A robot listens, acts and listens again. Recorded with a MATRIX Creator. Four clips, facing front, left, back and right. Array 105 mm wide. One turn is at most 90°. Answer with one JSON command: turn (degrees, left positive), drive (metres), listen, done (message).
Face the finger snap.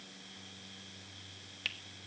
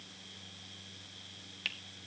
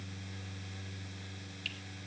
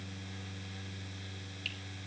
{"turn": 45}
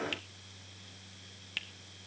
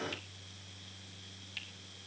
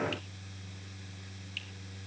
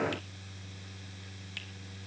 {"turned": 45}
{"turn": -15}
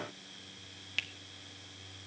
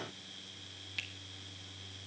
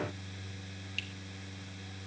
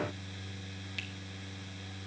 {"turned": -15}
{"done": "Facing the finger snap, 1 to 2 m away."}